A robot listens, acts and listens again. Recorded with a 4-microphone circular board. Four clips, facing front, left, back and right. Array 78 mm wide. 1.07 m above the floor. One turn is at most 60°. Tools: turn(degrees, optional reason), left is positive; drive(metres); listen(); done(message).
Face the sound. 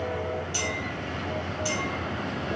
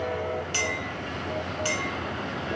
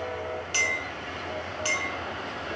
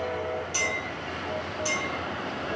turn(degrees=60, reason="The clink: 135° left.")
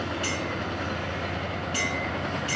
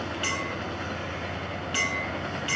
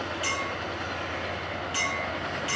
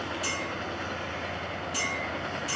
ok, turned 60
turn(degrees=60, reason="The clink is now 95° left.")
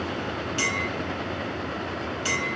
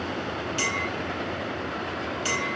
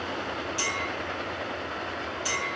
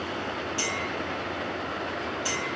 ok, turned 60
turn(degrees=45, reason="The clink is now 45° left.")
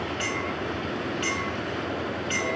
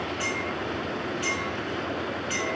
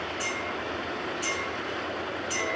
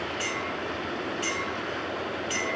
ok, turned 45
done("Found it: a clink, straight ahead.")